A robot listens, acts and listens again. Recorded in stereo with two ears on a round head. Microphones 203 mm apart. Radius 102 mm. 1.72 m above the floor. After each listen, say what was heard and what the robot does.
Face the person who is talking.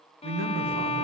The man speaking: about 60° right or 120° right. Turn 60° right.
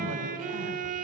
So it is at 55° right. Turn 55° right.
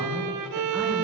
Keep listening.
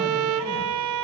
Keep listening.
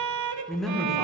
Facing the man speaking.